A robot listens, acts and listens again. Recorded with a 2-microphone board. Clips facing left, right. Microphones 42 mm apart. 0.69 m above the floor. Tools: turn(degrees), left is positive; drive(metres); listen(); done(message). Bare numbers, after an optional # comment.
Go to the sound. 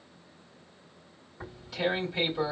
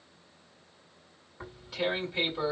turn(-30)
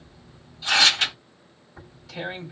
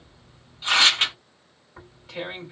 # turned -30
# So it is at 140° right.
turn(-140)
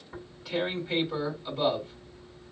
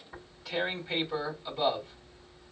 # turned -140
drive(1.0)
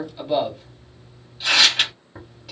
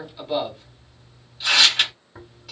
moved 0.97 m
drive(1.0)
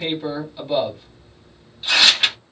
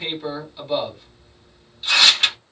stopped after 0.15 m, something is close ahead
done("I am next to the tearing paper.")